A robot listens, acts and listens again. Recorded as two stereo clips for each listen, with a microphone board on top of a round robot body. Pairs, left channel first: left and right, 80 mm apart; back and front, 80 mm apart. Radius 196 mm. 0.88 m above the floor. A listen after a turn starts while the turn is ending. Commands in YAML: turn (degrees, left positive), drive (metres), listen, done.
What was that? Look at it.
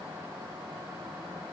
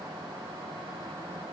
listen: true
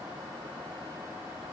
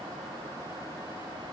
listen: true
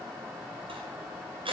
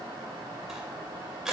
turn: -85
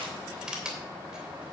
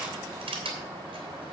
turn: -10
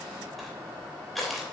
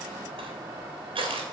done: "Found it: crushing, straight ahead."